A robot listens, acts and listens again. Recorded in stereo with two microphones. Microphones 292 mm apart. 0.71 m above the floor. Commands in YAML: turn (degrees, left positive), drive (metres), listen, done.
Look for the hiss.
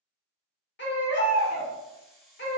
turn: 30
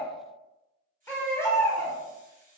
turn: -30
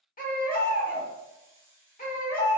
turn: -10
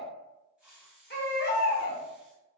done: "Facing the hiss."